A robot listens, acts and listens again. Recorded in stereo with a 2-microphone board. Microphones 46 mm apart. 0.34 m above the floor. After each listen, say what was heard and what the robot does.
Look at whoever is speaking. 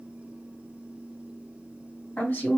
The woman speaking: about 40° left or 140° left. Turn 40° left.
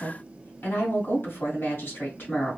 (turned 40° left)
So it is at 95° left. Turn 95° left.
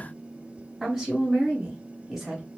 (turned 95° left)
Found it: a woman speaking, straight ahead.